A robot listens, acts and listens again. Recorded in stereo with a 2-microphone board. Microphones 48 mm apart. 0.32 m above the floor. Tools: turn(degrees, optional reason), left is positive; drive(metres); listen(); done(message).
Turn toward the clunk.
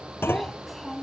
turn(degrees=50, reason="The clunk: about 50° left or 130° left.")
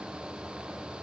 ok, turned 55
listen()
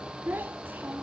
done("I heard a clunk, but can't make it out now. It was about 5° right or 75° left.")